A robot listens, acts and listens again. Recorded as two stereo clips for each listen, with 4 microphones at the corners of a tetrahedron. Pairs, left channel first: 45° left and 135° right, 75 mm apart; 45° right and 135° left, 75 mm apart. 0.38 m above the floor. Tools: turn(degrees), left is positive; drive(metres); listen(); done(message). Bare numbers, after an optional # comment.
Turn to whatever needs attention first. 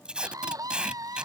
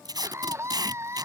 # The scream: 175° right.
turn(-175)
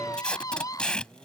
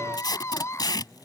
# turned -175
done("Found it: a scream, straight ahead.")